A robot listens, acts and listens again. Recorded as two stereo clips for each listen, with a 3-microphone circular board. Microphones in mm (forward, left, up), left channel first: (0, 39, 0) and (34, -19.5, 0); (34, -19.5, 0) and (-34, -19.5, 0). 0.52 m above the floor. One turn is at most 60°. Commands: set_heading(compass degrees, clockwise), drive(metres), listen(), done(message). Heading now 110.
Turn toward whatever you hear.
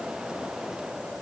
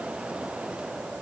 listen()
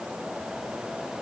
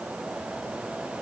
listen()
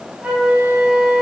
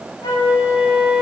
set_heading(100)
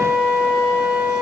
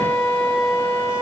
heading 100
done("Found it: a flute, straight ahead, 1 to 2 m away.")